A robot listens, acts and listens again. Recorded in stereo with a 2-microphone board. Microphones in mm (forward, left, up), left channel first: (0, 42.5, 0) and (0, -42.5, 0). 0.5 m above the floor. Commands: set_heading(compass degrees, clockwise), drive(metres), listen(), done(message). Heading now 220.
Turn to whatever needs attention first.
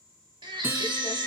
set_heading(285)
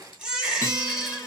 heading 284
set_heading(294)
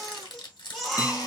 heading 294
done("Facing the baby crying, 1 to 2 m away.")